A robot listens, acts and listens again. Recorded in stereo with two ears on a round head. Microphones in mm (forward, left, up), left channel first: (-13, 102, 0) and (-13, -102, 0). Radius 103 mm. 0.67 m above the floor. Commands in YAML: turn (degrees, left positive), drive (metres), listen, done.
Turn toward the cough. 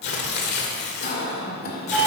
turn: 40
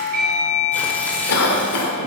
turn: 95
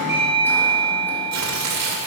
listen: true
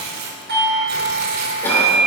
listen: true
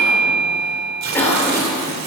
turn: 10
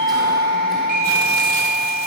listen: true
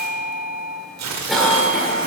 listen: true
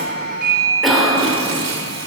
done: "Found it: a cough, straight ahead."